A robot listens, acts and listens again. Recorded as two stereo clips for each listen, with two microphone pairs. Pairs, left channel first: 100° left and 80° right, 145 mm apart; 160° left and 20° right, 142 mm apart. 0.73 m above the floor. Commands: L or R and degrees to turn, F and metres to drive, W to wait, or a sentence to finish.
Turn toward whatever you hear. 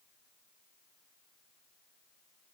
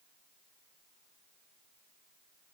W
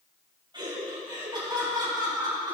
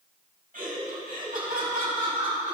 R20
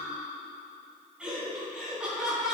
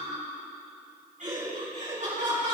Facing the laughter.